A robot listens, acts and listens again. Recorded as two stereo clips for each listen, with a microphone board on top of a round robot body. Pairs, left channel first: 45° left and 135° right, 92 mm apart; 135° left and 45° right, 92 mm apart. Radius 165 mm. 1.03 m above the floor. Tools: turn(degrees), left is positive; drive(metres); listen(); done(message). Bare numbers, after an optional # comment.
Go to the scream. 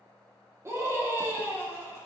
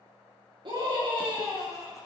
# The scream: 75° right.
turn(-75)
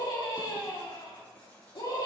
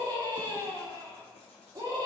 drive(1.0)
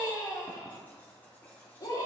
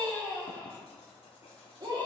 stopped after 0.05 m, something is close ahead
done("Blocked. The scream is further on, straight ahead.")